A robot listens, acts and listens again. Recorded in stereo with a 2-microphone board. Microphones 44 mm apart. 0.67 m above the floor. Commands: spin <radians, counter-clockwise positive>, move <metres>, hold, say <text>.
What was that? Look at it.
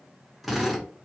spin 0.52
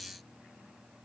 hold
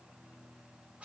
hold
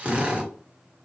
spin -0.52
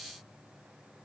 hold
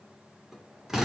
spin -0.17
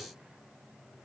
hold
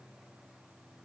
hold
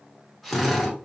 say Found it: a drill, straight ahead, 1 to 2 m away.